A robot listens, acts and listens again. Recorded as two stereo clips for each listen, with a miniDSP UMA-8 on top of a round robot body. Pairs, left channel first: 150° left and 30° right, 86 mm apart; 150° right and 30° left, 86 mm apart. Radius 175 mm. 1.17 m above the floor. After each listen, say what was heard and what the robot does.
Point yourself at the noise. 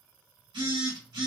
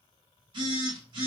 Found it: a phone buzzing, straight ahead.